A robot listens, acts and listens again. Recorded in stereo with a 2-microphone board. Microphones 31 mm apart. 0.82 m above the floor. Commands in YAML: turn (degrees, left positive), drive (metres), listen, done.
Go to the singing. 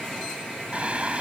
turn: -40
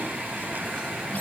turn: -100
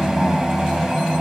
turn: -15
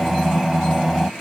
drive: 1.0
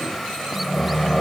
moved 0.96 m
drive: 1.0
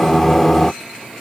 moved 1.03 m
turn: 10
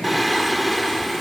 drive: 1.0
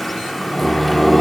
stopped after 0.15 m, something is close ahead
done: "Arrived at the singing, straight ahead."